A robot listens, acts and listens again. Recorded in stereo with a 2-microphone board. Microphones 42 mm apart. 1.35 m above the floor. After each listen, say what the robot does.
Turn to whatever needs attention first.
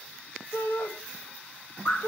Turn 90° left.
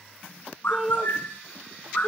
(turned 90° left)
Facing the shout.